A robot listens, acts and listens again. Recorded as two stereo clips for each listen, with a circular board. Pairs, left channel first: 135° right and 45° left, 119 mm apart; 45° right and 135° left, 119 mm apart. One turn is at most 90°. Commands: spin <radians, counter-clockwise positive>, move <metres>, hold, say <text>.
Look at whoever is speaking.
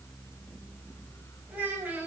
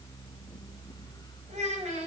spin 1.57
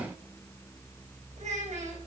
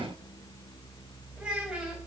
spin 0.52
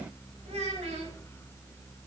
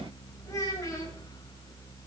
spin 0.26
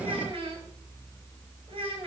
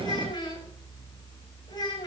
spin 0.17
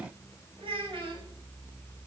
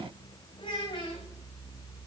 say Found it: a child speaking, straight ahead, over 4 m away.